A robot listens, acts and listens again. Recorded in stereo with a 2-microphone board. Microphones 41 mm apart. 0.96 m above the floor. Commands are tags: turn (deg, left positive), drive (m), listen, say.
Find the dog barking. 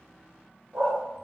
<turn deg="-90"/>
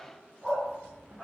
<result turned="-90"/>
<say>Found it: a dog barking, straight ahead, 2 to 4 m away.</say>